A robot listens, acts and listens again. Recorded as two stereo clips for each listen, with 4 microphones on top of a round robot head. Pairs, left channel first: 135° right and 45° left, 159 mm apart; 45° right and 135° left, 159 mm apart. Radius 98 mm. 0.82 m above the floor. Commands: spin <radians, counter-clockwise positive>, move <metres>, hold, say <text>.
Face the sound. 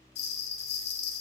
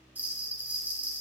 spin -2.53
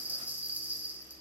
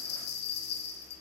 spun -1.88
spin -0.61
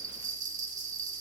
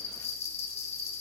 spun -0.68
say Facing the bell.